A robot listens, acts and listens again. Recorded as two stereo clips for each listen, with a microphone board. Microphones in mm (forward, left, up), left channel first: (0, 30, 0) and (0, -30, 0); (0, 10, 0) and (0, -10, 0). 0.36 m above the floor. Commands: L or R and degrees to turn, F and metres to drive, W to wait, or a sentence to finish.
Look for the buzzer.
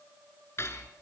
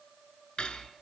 W
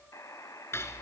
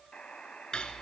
L65
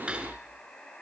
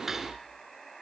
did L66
L20
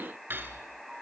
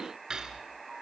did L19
Found it: a buzzer, straight ahead, 2 to 4 m away.